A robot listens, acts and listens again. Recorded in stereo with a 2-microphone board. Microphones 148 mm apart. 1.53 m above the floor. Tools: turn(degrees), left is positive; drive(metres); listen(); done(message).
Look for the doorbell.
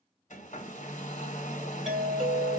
turn(degrees=-30)
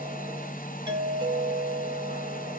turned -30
turn(degrees=-150)
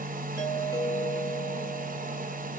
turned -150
turn(degrees=25)
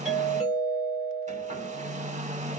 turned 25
done("Found it: a doorbell, straight ahead, 1 to 2 m away.")